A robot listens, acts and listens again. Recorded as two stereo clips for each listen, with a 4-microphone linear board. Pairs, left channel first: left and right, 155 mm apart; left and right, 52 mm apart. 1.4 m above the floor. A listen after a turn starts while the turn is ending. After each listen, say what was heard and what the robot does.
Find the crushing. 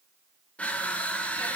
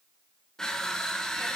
Turn 30° left.
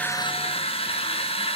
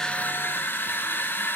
So it is at 140° left. Turn 140° left.
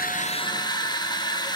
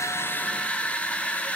The crushing is now 30° left. Turn 30° left.
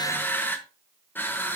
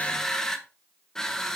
The crushing is now 15° left. Turn 15° left.
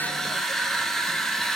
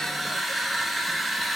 Found it: crushing, straight ahead.